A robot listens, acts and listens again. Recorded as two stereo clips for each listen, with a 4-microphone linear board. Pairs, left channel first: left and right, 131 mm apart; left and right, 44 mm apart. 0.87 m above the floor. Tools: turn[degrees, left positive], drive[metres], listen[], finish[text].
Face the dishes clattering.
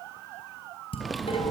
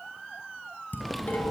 Thought: The dishes clattering: about 45° left or 135° left.
Action: turn[45]
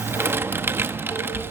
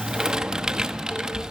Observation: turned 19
Action: listen[]
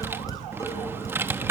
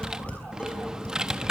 Thought: So it is at 25° left.
Action: turn[25]
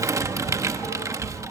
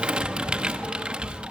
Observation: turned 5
Thought: Nothing new. It was at 20° left.
Action: turn[20]
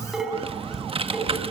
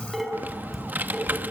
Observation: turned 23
Action: finish[Found it: dishes clattering, straight ahead, over 4 m away.]